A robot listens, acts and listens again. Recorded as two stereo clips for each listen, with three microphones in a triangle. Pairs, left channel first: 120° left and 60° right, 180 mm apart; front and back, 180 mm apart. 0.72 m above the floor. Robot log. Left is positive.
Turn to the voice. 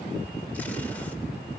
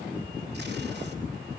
cmd idle
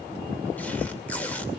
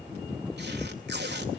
cmd idle
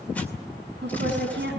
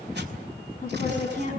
note: The woman speaking: 45° right.
cmd yaw -45
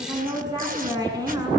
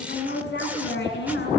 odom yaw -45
note: The woman speaking is now 10° left.
cmd yaw +10
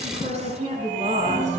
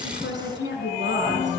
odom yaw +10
note: The woman speaking is now 10° right.
cmd yaw -10
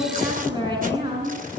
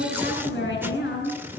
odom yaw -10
end: Facing the woman speaking.